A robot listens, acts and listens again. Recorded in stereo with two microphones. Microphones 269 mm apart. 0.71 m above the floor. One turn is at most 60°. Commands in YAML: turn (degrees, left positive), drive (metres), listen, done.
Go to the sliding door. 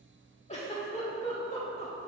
listen: true
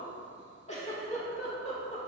listen: true
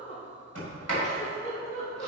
turn: -60
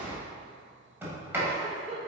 turn: -10
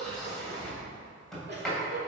drive: 1.0
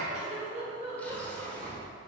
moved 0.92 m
drive: 1.0
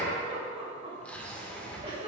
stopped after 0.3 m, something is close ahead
done: "I am next to the sliding door."